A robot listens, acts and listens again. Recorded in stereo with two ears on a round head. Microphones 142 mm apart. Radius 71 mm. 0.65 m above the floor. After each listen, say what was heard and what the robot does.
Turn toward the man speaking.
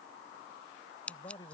The man speaking: about 25° left or 155° left. Turn 25° left.
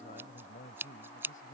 So it is at 125° left. Turn 125° left.
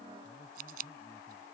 Keep listening.
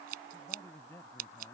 The man speaking is now 15° left. Turn 15° left.
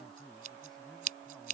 Keep listening.
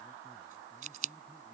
Keep listening.
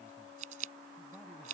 I heard a man speaking from this way, but can't make it out now.